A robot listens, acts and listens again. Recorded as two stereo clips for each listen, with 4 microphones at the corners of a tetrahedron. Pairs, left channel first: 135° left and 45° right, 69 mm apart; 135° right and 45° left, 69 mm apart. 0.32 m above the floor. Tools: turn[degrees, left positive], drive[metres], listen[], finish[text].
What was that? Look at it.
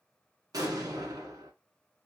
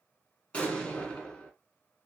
Thought: The explosion: 65° right.
Action: turn[-65]
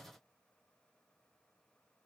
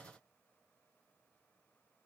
Action: finish[I heard an explosion from this way, but can't make it out now.]